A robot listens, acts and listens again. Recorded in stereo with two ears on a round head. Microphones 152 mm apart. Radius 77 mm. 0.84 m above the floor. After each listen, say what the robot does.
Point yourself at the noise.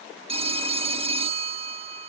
Turn 30° right.
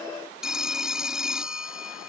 Facing the phone ringing.